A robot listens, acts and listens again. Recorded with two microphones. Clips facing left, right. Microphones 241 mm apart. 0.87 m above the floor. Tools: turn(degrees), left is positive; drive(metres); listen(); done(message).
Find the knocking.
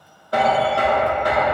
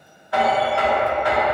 turn(degrees=45)
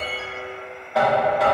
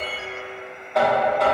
done("Facing the knocking, 1 to 2 m away.")